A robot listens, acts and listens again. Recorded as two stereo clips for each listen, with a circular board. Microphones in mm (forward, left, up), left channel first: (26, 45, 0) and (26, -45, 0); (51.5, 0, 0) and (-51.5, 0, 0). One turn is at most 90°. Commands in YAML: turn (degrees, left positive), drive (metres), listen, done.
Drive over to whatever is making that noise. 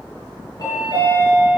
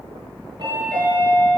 turn: 90
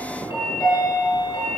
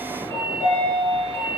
turn: 65
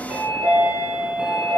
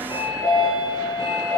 turn: -15
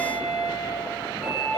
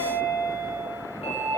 drive: 1.0
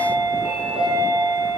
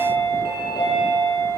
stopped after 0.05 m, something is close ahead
turn: -10
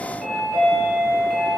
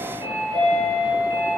done: "Something is in my way. I am facing the chime but have not reached it."